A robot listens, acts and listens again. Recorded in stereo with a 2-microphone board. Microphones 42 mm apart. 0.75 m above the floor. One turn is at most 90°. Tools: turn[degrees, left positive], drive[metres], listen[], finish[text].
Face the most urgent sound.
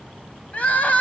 Thought: The crying: about 45° left or 135° left.
Action: turn[45]
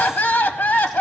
Thought: So it is at 80° left.
Action: turn[80]
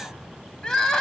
Thought: The crying is now 15° left.
Action: turn[15]
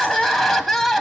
Action: finish[Facing the crying.]